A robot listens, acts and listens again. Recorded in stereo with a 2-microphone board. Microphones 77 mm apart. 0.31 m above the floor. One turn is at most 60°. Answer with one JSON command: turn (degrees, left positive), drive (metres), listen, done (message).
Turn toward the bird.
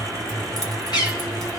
{"turn": 60}
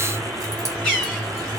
{"turn": 10}
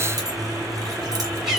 {"done": "Found it: a bird, straight ahead."}